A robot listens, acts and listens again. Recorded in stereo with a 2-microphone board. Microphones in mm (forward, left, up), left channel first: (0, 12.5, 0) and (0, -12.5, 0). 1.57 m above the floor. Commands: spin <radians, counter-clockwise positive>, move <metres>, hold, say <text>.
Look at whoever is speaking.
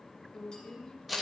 spin 0.61
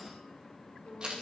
spin 1.75
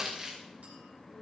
spin -0.35
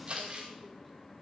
hold
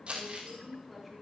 say Found it: a woman speaking, straight ahead, over 4 m away.